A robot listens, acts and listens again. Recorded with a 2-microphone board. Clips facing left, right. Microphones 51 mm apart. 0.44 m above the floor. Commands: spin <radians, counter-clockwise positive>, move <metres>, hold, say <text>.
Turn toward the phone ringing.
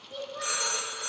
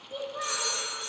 spin 1.22
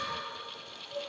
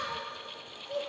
hold
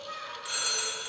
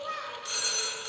spin 0.26
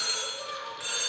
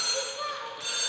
say Found it: a phone ringing, straight ahead, 1 to 2 m away.